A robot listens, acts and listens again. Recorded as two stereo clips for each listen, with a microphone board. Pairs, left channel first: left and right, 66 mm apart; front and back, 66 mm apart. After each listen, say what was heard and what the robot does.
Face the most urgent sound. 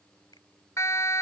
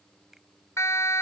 The siren: 45° left. Turn 45° left.
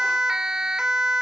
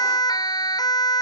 The siren is now 10° right. Turn 10° right.
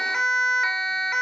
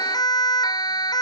Facing the siren.